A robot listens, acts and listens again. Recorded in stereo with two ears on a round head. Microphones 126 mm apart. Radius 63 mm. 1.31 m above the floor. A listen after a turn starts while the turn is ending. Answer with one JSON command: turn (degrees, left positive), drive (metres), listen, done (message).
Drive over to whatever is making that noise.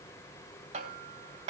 {"turn": -45}
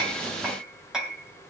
{"drive": 1.0}
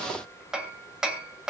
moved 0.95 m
{"drive": 1.0}
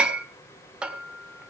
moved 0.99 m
{"drive": 1.0}
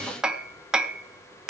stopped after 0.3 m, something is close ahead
{"done": "I am next to the hammering."}